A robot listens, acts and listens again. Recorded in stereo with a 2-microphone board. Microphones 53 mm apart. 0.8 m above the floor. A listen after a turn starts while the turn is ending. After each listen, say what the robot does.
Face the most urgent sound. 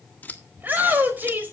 Turn 35° right.
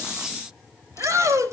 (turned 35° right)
Turn 105° right.
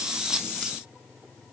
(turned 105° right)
Keep listening.
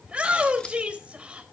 Turn 20° right.
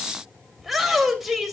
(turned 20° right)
Facing the shout.